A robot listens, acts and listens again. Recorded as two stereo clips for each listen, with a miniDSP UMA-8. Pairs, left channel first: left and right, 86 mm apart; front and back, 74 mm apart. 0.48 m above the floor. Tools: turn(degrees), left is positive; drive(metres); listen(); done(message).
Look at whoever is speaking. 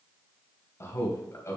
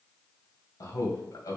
turn(degrees=35)
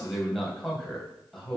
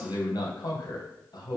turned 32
done("Found it: a man speaking, straight ahead.")